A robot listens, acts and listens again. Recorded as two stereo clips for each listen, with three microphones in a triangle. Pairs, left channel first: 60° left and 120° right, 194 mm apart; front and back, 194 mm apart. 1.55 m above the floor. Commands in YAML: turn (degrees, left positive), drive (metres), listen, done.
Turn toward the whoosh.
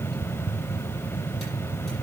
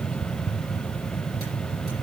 listen: true
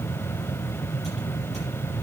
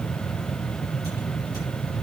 listen: true
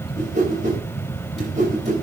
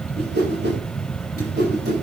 turn: -165
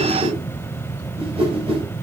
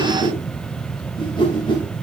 turn: -65
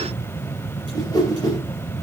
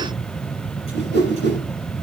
turn: -10
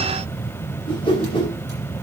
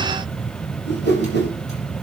done: "Found it: a whoosh, straight ahead."